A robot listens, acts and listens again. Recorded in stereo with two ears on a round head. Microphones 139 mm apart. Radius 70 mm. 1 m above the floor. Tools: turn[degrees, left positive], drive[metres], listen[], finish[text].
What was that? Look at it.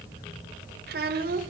Thought: The child speaking: about 55° right or 125° right.
Action: turn[-55]
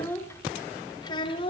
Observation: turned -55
Thought: So it is at 35° left.
Action: turn[35]
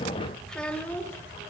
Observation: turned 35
Thought: The child speaking is now 10° left.
Action: turn[10]
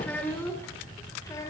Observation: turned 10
Thought: The child speaking is now 20° left.
Action: turn[20]
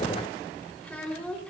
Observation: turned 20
Thought: The child speaking is now 10° left.
Action: turn[10]
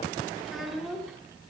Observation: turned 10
Action: finish[Found it: a child speaking, straight ahead, 2 to 4 m away.]